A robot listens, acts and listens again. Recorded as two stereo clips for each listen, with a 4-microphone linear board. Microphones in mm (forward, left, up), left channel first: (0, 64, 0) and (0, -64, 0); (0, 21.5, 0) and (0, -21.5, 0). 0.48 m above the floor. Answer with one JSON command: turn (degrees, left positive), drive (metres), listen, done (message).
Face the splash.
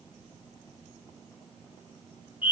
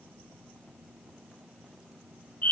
{"listen": true}
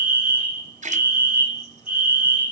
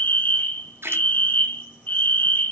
{"turn": -90}
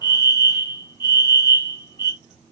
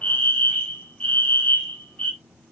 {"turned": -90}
{"done": "Facing where the splash came from. I can't hear it now."}